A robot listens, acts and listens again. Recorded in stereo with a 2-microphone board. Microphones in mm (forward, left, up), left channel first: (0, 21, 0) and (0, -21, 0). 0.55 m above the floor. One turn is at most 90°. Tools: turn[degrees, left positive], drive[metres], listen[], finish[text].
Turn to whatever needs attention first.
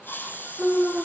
Action: turn[30]
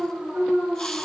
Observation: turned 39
Thought: So it is at 40° right.
Action: turn[-40]
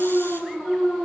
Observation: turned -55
Thought: The alarm is now 15° left.
Action: turn[15]
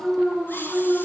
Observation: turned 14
Action: finish[Found it: an alarm, straight ahead, over 4 m away.]